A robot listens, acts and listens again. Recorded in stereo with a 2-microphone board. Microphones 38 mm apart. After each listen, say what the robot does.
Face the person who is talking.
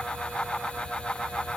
Keep listening.
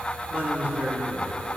Turn 50° right.
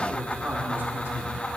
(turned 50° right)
Turn 70° right.
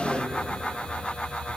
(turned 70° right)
Keep listening.
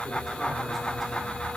Keep listening.
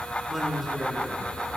Found it: a man speaking, straight ahead, 2 to 4 m away.